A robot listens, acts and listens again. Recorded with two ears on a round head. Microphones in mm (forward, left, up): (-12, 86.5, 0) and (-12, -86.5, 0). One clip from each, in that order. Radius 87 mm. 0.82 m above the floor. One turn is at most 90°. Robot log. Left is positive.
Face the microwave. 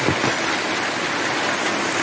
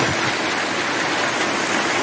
cmd idle
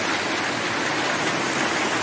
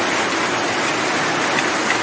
cmd idle
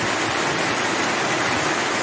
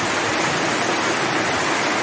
end: I can't make out a microwave.